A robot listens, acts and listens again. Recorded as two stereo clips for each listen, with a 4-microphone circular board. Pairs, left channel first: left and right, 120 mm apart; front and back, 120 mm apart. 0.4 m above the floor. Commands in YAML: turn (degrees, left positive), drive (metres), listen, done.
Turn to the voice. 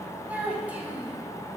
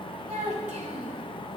turn: -165
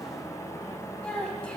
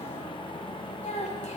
turn: 10
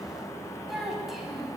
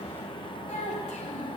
done: "Found it: a child speaking, straight ahead."